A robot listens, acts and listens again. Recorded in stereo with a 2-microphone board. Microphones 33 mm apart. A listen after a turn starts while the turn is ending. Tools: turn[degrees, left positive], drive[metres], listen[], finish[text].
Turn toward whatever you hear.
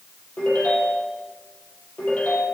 Thought: The ringtone: about 60° left or 120° left.
Action: turn[60]
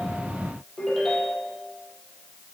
Action: finish[Facing the ringtone.]